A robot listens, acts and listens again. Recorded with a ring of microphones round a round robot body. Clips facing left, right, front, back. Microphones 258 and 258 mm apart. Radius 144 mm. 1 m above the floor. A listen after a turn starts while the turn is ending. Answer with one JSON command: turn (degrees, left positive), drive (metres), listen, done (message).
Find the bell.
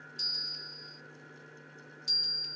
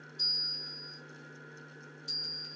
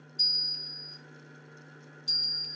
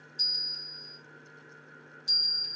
{"turn": 85}
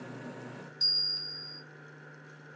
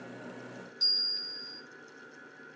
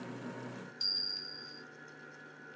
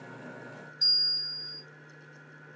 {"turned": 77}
{"done": "Facing the bell."}